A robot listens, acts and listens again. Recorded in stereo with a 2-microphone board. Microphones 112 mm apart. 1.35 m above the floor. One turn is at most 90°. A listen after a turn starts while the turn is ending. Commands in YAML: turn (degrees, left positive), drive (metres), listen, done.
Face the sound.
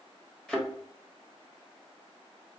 turn: 30
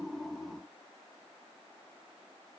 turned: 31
listen: true
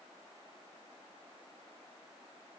done: "I heard a thud, but can't make it out now. It was about 25° right or 140° left."